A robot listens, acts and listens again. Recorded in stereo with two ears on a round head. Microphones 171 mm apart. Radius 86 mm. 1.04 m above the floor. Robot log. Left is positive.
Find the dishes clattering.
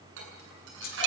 note: The dishes clattering: about 70° right or 110° right.
cmd yaw -70
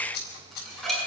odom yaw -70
end: Found it: dishes clattering, straight ahead.